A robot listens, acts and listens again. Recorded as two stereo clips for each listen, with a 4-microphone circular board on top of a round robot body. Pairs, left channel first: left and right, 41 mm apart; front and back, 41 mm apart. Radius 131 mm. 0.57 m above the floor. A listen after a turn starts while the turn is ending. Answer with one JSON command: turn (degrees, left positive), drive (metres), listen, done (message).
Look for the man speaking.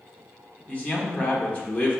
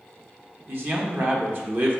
{"turn": 150}
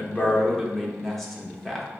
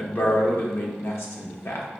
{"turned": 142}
{"done": "Found it: a man speaking, straight ahead, 1 to 2 m away."}